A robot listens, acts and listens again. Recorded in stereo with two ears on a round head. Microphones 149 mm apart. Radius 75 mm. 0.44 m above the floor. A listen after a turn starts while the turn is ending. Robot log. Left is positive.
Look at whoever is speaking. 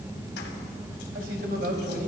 note: The man speaking: about 55° right or 125° right.
cmd yaw -55
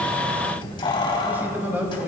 note: So it is at 10° right.
cmd yaw -10
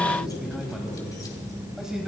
end: Found it: a man speaking, straight ahead.